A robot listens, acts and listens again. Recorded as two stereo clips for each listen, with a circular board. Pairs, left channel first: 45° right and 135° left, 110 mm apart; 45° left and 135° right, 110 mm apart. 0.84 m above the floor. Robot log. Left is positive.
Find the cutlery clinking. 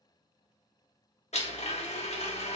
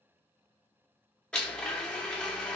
cmd idle
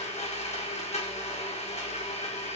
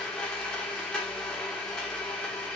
cmd idle
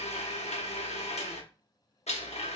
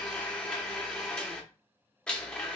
end: I can't make out cutlery clinking to turn to.